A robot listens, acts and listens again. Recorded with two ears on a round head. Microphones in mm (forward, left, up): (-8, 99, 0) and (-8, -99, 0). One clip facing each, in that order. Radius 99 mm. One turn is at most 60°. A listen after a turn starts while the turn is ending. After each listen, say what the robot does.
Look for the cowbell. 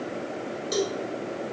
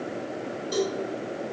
Turn 25° left.
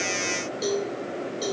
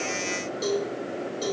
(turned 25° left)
Found it: a cowbell, straight ahead, 2 to 4 m away.